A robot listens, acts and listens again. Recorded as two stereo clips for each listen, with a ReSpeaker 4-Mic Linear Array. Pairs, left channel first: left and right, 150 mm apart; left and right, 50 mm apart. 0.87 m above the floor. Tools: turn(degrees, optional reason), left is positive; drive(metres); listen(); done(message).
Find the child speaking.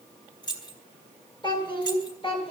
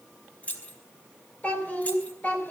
turn(degrees=40, reason="The child speaking: about 40° left or 140° left.")
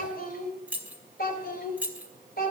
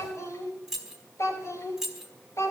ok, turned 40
turn(degrees=100, reason="So it is at 100° left.")
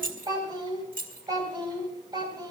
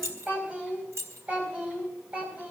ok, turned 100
turn(degrees=-30, reason="The child speaking is now 30° right.")
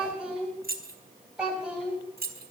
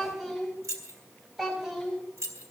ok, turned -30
done("Found it: a child speaking, straight ahead.")